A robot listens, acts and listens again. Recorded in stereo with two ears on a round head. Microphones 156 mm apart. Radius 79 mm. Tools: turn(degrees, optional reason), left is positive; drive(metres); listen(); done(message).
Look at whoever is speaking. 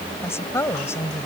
turn(degrees=15, reason="The woman speaking: about 15° left or 165° left.")
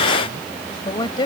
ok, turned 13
turn(degrees=150, reason="So it is at 150° left.")
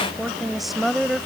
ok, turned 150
done("Found it: a woman speaking, straight ahead.")